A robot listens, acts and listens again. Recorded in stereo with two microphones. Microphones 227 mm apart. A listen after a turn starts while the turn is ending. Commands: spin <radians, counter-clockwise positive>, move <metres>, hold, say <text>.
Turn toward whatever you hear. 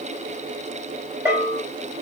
spin -0.52
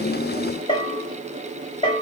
spin 0.35
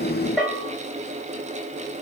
say Facing the bell.